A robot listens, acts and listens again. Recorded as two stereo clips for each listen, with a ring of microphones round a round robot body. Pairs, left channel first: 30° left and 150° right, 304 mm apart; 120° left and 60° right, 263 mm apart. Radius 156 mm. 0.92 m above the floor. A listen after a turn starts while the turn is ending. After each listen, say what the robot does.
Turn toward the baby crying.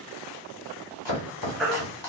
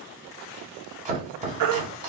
Turn 60° right.
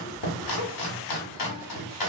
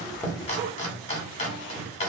Keep listening.
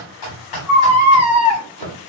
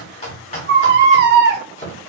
Turn 10° right.
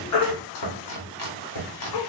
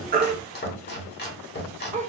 Keep listening.
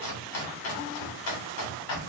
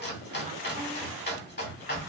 Keep listening.
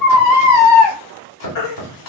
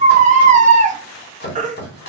Facing the baby crying, under 1 m away.